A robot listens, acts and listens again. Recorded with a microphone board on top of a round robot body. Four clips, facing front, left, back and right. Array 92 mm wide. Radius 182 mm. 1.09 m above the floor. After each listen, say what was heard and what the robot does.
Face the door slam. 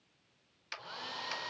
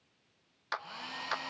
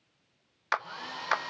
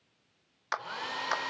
Keep listening.
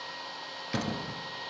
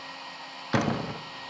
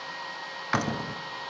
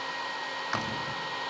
The door slam: 105° left. Turn 105° left.
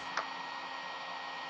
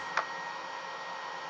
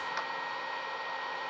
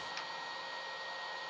Facing where the door slam came from. I can't hear it now.